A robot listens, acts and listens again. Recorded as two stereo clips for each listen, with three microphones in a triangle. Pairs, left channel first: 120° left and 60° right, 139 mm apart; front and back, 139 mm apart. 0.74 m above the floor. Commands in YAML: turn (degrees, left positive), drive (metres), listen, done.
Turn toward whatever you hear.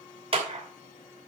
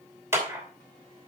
turn: -110
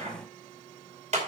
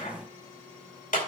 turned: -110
turn: -25
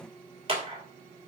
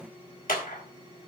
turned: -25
turn: -10
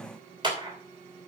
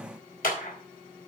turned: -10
done: "Found it: a clap, straight ahead."